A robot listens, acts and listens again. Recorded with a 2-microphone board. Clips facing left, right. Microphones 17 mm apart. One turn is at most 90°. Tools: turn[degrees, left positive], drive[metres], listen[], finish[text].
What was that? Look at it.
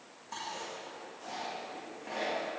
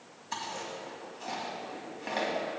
Thought: The chewing: about 60° right or 120° right.
Action: turn[-60]
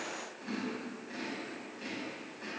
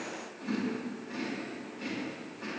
Action: finish[Found it: chewing, straight ahead, 2 to 4 m away.]